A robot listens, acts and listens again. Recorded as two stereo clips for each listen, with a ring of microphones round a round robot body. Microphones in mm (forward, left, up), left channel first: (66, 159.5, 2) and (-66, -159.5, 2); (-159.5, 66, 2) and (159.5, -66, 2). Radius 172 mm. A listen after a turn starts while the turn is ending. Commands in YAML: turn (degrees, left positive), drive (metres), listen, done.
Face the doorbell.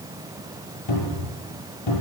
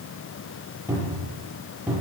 listen: true
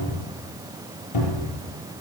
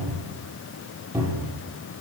listen: true
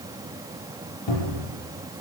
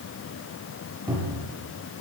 done: "I can't make out a doorbell, only a cupboard door."